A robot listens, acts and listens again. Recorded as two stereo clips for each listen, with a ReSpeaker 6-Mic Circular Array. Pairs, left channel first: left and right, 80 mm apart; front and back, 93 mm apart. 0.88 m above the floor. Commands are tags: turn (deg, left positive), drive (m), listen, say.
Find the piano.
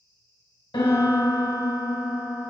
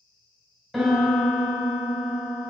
<turn deg="90"/>
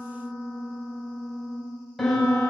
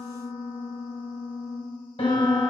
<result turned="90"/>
<say>Facing the piano.</say>